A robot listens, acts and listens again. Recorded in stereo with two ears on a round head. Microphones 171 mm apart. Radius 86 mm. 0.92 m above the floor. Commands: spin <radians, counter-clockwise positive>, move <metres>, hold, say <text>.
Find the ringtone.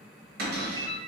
spin -0.79
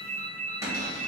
spin -1.48
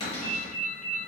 spin -0.61
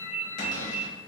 spin -0.35
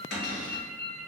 say Found it: a ringtone, straight ahead.